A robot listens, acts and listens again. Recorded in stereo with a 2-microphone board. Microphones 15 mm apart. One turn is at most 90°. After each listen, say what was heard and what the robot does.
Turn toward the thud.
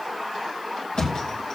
Turn 90° left.
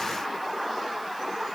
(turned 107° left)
Nothing new. It was at 15° right. Turn 15° right.
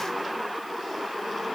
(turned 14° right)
I heard a thud from this way, but can't make it out now.